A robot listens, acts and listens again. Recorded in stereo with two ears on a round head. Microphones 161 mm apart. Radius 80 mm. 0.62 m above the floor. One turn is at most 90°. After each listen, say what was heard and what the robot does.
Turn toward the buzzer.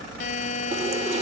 The buzzer: about 40° left or 140° left. Turn 40° left.
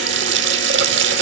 Keep listening.
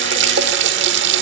Keep listening.
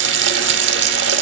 I heard a buzzer, but can't make it out now. It was about straight ahead or 100° left.